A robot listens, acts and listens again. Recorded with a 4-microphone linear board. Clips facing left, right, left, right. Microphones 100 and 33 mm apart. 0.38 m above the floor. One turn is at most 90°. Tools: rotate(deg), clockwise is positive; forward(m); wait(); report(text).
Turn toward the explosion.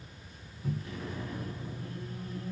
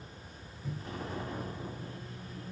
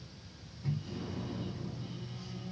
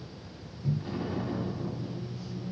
rotate(35)
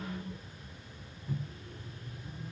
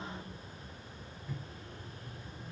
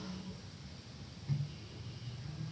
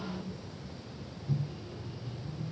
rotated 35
wait()
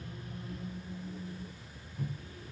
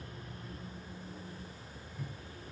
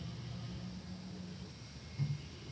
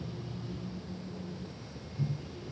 report("I heard an explosion, but can't make it out now. It was about straight ahead or 110° right.")